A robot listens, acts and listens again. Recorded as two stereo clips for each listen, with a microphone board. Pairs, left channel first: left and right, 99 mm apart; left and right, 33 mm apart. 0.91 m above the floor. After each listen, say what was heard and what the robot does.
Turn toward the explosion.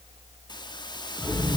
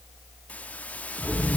Turn 30° right.
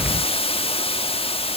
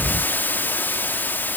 So it is at 145° right. Turn 145° right.
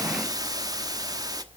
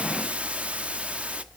Facing where the explosion came from. I can't hear it now.